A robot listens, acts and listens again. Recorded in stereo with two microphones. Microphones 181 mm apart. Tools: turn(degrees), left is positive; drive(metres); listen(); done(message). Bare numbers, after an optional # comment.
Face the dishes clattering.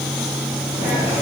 listen()
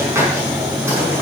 listen()
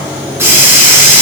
done("I can't make out dishes clattering to turn to.")